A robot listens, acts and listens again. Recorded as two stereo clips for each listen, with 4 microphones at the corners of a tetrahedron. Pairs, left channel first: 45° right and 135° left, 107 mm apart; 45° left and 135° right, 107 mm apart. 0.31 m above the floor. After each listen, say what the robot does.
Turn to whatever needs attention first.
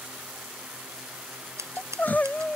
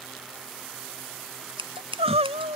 Turn 120° right.
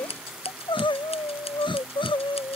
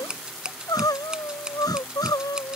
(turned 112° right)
Turn 10° right.
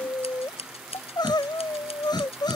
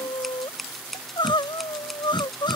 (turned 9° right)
Found it: crying, straight ahead.